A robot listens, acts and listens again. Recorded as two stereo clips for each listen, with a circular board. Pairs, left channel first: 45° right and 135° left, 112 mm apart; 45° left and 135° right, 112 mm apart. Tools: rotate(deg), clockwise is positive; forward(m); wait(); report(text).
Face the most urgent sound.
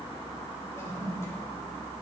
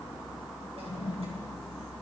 wait()
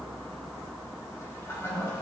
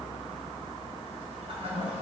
wait()
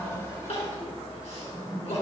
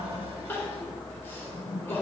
rotate(25)
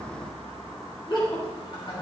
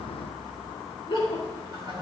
report("Facing the crying.")